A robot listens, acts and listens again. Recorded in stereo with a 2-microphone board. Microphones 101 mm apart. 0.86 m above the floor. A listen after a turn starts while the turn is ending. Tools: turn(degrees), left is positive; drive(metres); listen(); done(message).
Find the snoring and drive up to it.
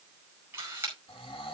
turn(degrees=60)
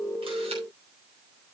listen()
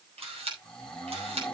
turn(degrees=10)
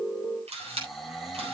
drive(metres=1.0)
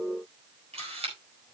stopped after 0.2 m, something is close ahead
listen()
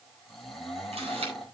done("Something is in my way. I am facing the snoring but have not reached it.")